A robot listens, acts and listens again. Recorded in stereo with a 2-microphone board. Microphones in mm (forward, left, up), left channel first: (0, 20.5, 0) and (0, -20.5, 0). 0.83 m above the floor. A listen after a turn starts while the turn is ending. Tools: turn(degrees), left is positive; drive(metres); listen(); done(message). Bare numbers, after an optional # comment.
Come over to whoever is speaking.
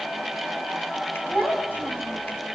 # The child speaking: about 60° left or 120° left.
turn(60)
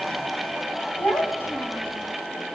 # So it is at 60° left.
turn(60)
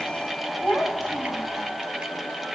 # The child speaking is now 25° left.
turn(25)
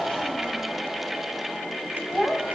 drive(1.0)
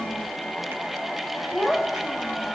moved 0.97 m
# The child speaking is now 10° right.
turn(-10)
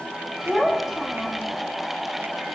drive(1.0)
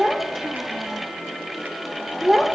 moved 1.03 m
# The child speaking is now 15° right.
turn(-15)
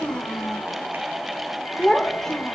drive(1.0)
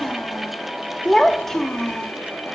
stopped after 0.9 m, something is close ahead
done("I am next to the child speaking.")